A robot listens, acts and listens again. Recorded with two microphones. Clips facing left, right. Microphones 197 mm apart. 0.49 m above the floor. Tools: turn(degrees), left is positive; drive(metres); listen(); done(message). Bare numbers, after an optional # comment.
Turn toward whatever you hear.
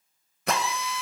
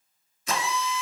# The drill: about 70° left or 110° left.
turn(70)
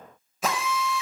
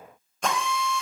done("Facing the drill.")